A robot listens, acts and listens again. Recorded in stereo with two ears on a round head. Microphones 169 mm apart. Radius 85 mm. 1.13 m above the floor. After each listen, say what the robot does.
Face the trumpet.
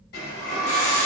Keep listening.
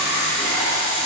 Keep listening.
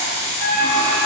Turn 30° right.
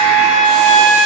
Turn 150° right.
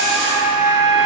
Turn 40° right.
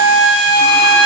Turn 30° right.
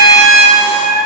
Facing the trumpet, 1 to 2 m away.